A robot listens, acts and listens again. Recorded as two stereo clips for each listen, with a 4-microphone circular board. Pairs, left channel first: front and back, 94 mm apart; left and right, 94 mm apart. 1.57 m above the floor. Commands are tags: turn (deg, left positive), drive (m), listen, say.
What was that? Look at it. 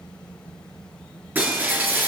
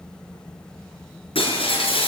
<turn deg="110"/>
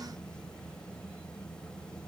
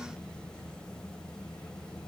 <say>I heard breaking glass from this way, but can't make it out now.</say>